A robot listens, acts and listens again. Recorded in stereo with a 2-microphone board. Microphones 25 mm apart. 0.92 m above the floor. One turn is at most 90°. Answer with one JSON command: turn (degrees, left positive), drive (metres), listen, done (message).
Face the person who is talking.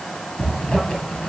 {"listen": true}
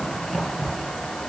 {"listen": true}
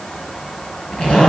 {"done": "I can't make out anyone speaking to turn to."}